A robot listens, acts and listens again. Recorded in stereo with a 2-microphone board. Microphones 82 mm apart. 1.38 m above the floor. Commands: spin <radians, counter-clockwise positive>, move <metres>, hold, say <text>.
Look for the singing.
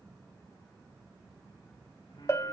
hold
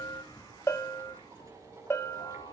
spin 1.57
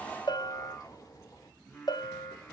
spin 0.26
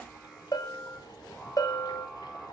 say Found it: singing, straight ahead, over 4 m away.